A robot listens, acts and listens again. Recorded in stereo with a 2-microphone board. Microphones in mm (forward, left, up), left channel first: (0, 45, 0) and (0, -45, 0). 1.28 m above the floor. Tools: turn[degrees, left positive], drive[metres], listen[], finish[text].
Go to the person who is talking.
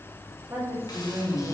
Thought: The woman speaking: about 35° right or 145° right.
Action: turn[-35]
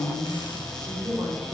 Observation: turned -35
Thought: So it is at 110° right.
Action: turn[-110]
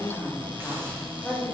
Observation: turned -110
Action: drive[1.0]
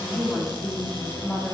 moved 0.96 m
Action: drive[1.0]
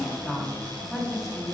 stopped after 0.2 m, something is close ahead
Action: finish[Arrived at the woman speaking, straight ahead.]